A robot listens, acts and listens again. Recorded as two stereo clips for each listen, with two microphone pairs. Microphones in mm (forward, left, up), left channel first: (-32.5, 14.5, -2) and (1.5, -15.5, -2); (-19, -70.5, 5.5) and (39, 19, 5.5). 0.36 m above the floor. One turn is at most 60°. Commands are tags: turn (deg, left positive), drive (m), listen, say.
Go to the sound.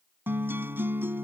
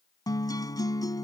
<turn deg="-60"/>
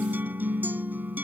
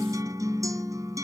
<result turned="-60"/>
<drive m="1.0"/>
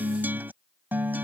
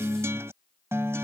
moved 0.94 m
<drive m="1.0"/>
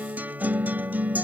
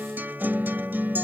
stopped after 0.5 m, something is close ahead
<turn deg="-10"/>
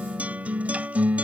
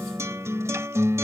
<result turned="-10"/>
<say>I am next to the guitar.</say>